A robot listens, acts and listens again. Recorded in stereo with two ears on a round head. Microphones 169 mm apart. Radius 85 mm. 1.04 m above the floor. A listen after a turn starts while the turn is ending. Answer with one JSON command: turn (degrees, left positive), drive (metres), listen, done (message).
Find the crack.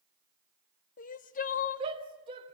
{"listen": true}
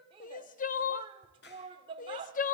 {"turn": 60}
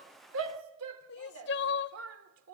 {"listen": true}
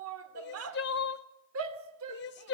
{"done": "I heard a crack, but can't make it out now. It was about straight ahead or 60° left."}